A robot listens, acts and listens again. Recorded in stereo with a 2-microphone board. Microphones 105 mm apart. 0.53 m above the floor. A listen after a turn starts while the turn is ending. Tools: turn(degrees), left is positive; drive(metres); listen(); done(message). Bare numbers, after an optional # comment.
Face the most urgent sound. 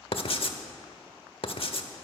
listen()
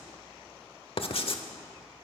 listen()
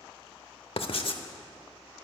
done("I can't make out anything urgent to turn to.")